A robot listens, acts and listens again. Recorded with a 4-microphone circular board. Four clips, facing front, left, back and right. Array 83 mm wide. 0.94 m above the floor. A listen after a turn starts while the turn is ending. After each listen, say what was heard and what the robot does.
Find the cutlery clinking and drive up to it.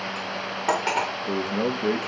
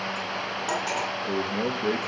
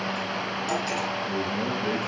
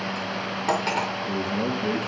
The cutlery clinking: 20° right. Turn 20° right.
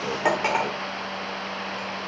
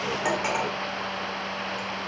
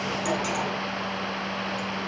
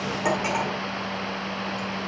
Drive 1.0 m forward.
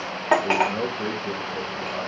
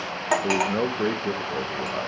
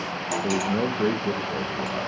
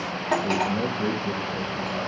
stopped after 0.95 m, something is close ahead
The cutlery clinking is now 10° left. Turn 10° left.
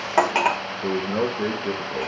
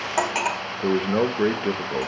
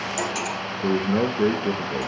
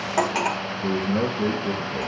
Arrived at the cutlery clinking, straight ahead.